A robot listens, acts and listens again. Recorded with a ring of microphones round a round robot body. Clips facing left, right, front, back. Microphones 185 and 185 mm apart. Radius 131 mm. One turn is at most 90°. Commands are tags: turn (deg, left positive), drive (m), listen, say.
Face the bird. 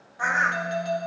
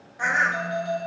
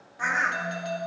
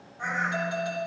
<turn deg="-20"/>
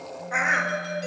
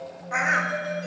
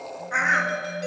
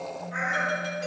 <say>Found it: a bird, straight ahead, under 1 m away.</say>